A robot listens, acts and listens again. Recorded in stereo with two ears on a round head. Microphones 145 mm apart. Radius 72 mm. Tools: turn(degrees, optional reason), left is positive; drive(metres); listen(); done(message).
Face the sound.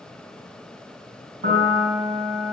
turn(degrees=-35, reason="The piano: about 35° right or 145° right.")
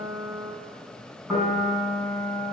done("Found it: a piano, straight ahead, over 4 m away.")